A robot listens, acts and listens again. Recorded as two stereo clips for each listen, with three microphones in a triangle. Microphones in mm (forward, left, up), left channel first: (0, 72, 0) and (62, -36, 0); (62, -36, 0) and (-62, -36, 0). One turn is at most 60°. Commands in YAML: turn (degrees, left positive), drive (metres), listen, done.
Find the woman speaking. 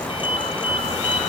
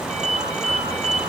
listen: true
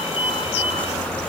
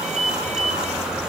listen: true
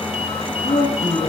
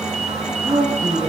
turn: 60
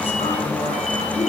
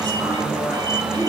turn: 60
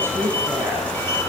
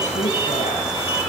listen: true
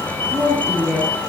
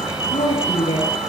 turn: 10
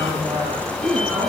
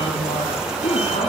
done: "Facing the woman speaking, over 4 m away."